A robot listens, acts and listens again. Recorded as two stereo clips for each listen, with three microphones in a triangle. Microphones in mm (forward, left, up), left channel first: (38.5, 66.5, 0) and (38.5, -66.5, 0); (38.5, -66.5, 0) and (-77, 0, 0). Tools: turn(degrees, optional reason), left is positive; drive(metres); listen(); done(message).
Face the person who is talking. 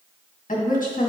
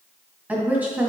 turn(degrees=70, reason="The woman speaking: 70° left.")
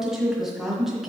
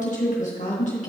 done("Facing the woman speaking, 1 to 2 m away.")